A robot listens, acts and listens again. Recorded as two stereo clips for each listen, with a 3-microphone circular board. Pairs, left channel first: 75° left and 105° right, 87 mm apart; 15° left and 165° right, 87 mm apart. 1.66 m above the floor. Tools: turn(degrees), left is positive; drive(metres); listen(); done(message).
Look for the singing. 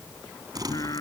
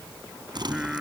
turn(degrees=115)
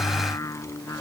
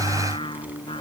turn(degrees=20)
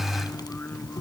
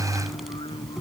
done("Facing the singing.")